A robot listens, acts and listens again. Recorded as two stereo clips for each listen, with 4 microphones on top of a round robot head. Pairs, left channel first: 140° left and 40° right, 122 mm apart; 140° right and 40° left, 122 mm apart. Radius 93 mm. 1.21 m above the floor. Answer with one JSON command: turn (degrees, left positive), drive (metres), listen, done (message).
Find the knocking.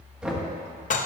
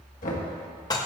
{"turn": -125}
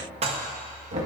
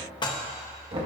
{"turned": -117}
{"done": "Found it: knocking, straight ahead, 1 to 2 m away."}